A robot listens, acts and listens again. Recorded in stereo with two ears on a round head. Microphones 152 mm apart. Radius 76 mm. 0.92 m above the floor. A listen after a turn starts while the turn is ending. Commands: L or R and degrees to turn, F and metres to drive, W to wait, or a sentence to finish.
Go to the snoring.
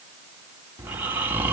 R30
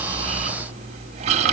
R135
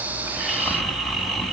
F1.0
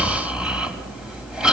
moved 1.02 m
F1.0
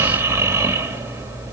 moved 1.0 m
R15
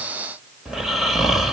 F1.0
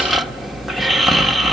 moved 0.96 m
F1.0
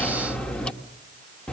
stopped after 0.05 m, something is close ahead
Arrived at the snoring, straight ahead.